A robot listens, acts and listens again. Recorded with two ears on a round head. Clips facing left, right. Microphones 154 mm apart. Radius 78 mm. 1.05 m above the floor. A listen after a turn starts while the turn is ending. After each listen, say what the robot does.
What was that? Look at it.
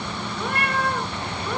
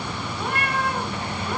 Turn 90° left.
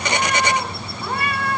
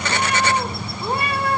Turn 25° right.
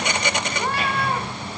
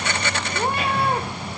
Turn 25° right.
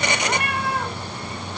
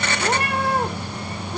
Turn 35° right.
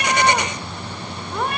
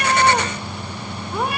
Facing the cat meowing.